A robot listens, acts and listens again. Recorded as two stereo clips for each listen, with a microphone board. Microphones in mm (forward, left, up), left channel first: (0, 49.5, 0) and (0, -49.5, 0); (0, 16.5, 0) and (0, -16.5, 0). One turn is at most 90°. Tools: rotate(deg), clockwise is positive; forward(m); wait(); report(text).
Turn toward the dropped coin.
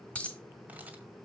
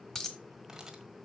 rotate(-30)
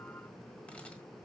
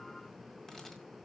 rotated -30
wait()
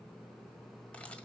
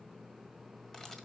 report("I heard a dropped coin, but can't make it out now. It was about 20° right or 140° left.")